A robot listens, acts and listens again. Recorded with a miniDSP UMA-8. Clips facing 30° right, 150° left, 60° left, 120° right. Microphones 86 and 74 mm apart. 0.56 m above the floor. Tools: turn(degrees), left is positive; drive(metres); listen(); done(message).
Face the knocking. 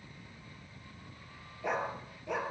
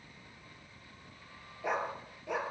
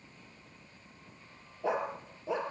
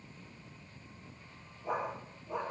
listen()
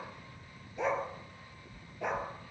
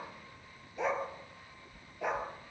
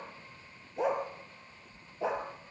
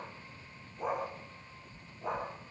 turn(degrees=-60)
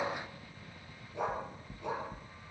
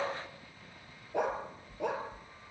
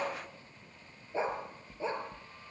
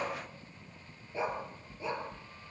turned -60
done("Facing the knocking, 2 to 4 m away.")